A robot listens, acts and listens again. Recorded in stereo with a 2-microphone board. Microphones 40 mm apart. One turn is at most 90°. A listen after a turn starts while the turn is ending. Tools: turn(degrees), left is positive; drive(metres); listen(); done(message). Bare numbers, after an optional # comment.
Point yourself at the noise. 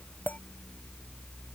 # The clink: about 45° left or 135° left.
turn(45)
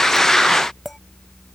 done("Facing the clink.")